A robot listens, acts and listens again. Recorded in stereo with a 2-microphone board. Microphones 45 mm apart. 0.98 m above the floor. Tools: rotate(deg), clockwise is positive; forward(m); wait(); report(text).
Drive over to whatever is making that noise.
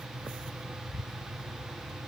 wait()
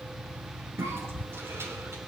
rotate(70)
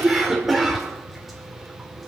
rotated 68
forward(1.0)
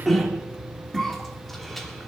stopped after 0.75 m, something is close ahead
report("Something is in my way. I am facing the cough but have not reached it.")